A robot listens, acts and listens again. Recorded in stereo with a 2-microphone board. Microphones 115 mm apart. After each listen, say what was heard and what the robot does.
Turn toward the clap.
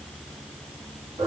Keep listening.
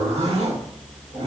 Keep listening.
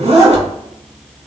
I can't make out a clap to turn to.